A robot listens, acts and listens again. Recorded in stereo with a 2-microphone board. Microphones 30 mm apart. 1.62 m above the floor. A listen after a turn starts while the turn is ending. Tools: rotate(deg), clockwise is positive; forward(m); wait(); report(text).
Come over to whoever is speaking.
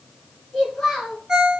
rotate(-30)
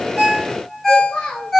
rotate(-135)
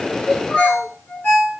wait()
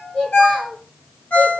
rotate(-35)
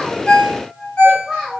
rotate(-10)
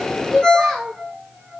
forward(1.0)
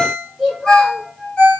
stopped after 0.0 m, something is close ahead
report("Blocked. The child speaking is further on, straight ahead.")